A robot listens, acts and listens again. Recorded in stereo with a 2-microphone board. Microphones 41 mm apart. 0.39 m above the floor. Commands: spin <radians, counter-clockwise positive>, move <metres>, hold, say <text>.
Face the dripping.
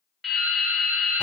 spin 0.52
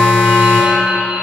hold
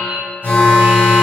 spin -0.44
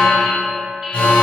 hold
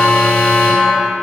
hold
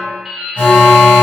say Facing the dripping, 1 to 2 m away.